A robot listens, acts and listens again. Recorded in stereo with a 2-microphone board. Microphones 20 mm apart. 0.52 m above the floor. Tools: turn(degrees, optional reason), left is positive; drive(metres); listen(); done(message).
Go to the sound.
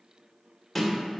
turn(degrees=30)
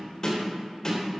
turn(degrees=150, reason="So it is at 150° left.")
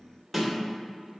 drive(metres=1.0)
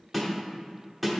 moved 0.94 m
drive(metres=1.0)
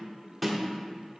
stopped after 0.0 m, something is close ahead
done("Arrived at the snare drum, straight ahead.")